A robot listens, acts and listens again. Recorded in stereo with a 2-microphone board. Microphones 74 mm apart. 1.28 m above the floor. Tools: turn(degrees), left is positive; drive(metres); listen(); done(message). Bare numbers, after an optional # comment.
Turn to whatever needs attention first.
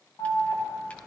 # The alarm: about 70° left or 110° left.
turn(70)
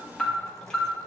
# So it is at 15° left.
turn(15)
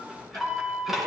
done("Facing the alarm, 2 to 4 m away.")